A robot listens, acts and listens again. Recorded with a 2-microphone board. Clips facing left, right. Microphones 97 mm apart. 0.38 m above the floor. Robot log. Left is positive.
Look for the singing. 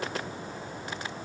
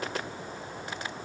cmd idle
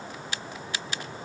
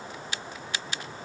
cmd idle
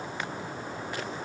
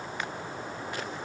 end: I can't make out singing.